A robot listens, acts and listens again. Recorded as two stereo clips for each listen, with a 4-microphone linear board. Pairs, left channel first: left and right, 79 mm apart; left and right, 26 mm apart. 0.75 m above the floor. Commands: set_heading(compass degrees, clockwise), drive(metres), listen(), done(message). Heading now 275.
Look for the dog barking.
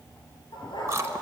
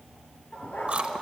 set_heading(185)
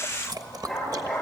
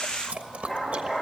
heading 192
done("Facing the dog barking, over 4 m away.")